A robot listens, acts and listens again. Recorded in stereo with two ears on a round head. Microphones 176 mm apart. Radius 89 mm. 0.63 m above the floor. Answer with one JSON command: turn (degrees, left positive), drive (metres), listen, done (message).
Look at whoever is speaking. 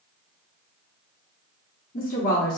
{"turn": 45}
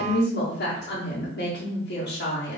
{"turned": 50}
{"turn": 75}
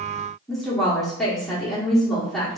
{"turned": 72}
{"done": "Facing the woman speaking."}